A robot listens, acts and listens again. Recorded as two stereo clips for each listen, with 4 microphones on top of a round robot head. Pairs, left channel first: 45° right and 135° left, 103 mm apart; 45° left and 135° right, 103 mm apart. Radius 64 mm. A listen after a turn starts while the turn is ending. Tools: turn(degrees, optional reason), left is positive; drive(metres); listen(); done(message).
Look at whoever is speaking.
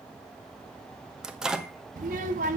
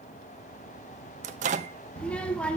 turn(degrees=125, reason="The child speaking: 125° left.")
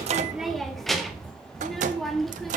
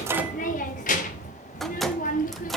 turn(degrees=40, reason="The child speaking is now 40° left.")
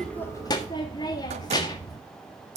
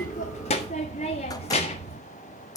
turn(degrees=10, reason="The child speaking is now 10° left.")
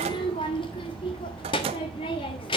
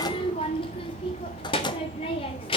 done("Found it: a child speaking, straight ahead.")